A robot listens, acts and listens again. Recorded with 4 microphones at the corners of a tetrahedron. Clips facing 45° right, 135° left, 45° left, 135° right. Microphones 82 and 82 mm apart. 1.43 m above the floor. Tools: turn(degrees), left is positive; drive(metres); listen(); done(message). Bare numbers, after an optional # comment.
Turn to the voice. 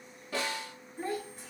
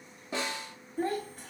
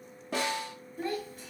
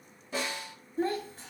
# The child speaking: 165° left.
turn(165)
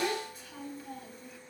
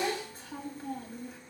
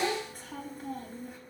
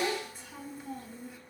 # The child speaking is now 80° left.
turn(80)
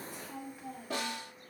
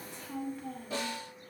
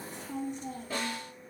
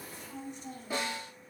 # The child speaking is now 35° left.
turn(35)
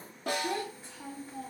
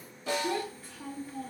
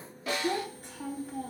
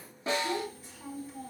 # The child speaking is now 25° left.
turn(25)
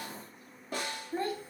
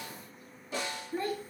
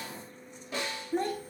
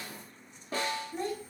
# The child speaking is now 15° left.
turn(15)
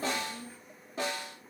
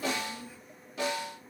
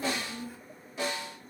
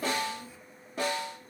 done("Found it: a child speaking, straight ahead.")